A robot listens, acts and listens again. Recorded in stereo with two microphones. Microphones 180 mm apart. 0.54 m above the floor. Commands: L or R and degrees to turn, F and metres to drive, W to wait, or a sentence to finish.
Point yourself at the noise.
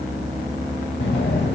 L90
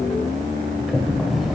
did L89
Facing the sliding door.